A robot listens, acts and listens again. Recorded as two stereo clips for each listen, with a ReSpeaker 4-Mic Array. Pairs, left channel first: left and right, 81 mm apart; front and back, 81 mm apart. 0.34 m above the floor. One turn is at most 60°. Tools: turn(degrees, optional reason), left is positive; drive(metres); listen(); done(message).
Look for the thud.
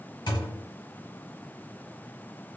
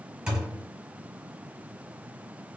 turn(degrees=60, reason="The thud: 100° left.")
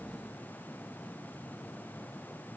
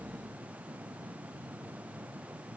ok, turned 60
turn(degrees=40, reason="Nothing new. It was at 40° left.")
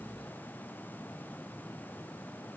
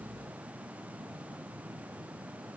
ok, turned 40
done("Facing where the thud came from. I can't hear it now.")